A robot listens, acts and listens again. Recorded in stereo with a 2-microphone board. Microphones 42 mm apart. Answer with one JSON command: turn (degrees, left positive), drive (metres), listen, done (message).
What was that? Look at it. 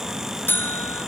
{"turn": 65}
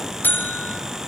{"turn": 50}
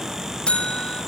{"turn": 25}
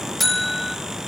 {"done": "Found it: a buzzer, straight ahead, 1 to 2 m away."}